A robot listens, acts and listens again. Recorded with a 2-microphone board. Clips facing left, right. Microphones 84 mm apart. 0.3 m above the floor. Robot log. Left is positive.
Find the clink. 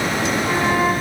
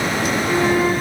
cmd idle
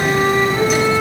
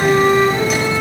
cmd idle
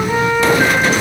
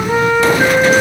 end: I can't make out a clink, only a flute.